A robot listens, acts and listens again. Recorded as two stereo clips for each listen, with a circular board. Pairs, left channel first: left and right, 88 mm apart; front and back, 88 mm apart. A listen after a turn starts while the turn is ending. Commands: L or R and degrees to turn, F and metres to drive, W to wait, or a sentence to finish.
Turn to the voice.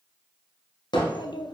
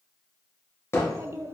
L120
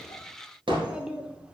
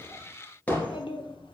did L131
R10
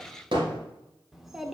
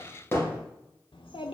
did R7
Found it: a child speaking, straight ahead, 1 to 2 m away.